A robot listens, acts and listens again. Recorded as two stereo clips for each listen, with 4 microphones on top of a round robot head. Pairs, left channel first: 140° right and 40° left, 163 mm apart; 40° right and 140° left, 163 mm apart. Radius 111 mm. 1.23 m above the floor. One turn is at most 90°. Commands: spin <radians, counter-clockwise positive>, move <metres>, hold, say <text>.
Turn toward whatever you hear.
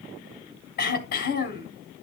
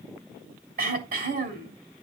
spin 1.57
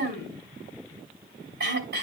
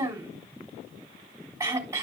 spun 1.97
spin 1.22
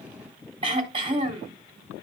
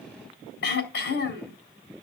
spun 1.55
spin -0.35
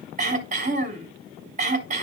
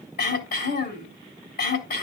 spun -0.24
say Found it: throat clearing, straight ahead.